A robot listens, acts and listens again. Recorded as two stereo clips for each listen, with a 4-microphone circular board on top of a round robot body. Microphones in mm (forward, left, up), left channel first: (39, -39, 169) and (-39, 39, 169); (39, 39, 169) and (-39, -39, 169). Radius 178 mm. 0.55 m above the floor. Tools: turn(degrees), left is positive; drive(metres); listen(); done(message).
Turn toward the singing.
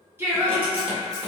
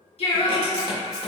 turn(degrees=80)
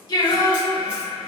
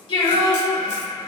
turn(degrees=20)
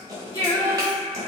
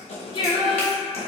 turn(degrees=15)
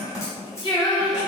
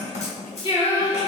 done("Facing the singing, 2 to 4 m away.")